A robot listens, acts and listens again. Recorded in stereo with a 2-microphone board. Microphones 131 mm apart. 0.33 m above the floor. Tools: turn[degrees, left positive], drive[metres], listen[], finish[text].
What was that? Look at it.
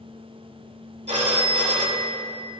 Thought: The phone ringing: about 65° right or 115° right.
Action: turn[-65]
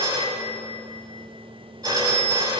Thought: So it is at 35° right.
Action: turn[-35]
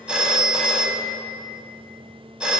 Thought: The phone ringing is now 10° right.
Action: turn[-10]
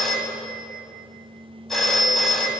Action: finish[Facing the phone ringing.]